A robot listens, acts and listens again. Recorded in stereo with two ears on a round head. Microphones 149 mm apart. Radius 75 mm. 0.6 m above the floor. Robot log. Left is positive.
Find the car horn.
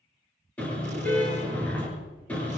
cmd yaw +30
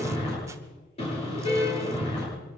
note: So it is at 140° left.
cmd yaw +140
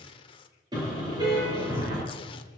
note: The car horn is now 25° right.
cmd yaw -25
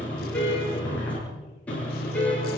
note: The car horn is now 10° left.
cmd yaw +10
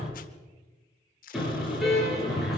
end: Facing the car horn.